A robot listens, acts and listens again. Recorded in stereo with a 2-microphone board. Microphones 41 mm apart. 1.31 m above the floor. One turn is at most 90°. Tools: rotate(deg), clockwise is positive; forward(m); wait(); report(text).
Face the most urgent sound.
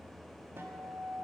wait()
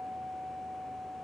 wait()
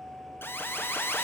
rotate(-65)
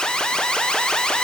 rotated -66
rotate(-25)
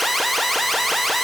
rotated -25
report("Facing the alarm, under 1 m away.")